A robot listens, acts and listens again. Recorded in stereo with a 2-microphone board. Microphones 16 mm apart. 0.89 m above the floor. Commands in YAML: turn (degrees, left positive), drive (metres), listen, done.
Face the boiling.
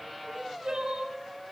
listen: true
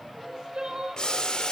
turn: 65
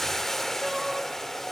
turn: 20
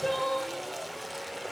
done: "Found it: boiling, straight ahead."